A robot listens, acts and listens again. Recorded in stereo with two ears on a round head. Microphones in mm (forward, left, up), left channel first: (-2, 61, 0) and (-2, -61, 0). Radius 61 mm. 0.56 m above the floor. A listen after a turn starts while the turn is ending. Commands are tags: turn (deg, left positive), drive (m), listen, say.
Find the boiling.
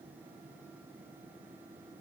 <listen/>
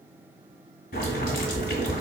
<turn deg="65"/>
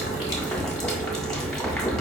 <say>Found it: boiling, straight ahead.</say>